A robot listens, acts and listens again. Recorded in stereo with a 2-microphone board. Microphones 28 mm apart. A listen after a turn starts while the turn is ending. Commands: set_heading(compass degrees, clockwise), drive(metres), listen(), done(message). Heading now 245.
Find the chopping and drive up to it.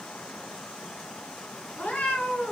listen()
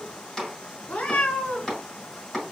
set_heading(225)
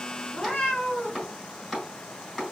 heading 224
drive(1.0)
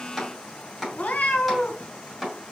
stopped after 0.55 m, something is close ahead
done("Something is in my way. I am facing the chopping but have not reached it.")